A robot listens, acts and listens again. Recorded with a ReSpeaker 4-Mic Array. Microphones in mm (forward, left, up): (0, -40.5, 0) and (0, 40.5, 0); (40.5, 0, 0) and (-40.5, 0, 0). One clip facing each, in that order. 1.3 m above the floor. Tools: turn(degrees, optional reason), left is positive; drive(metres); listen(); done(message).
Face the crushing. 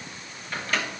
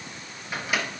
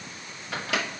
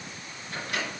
listen()
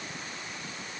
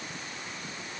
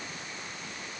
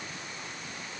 listen()
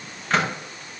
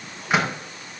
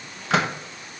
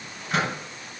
done("I can't make out crushing, only a microwave.")